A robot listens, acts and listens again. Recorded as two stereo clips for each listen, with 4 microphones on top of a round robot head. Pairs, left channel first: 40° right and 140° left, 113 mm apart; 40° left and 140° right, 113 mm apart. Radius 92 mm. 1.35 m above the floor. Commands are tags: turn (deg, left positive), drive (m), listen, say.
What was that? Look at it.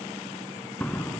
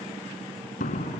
<turn deg="40"/>
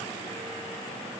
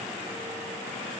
<say>I heard a door slam from this way, but can't make it out now.</say>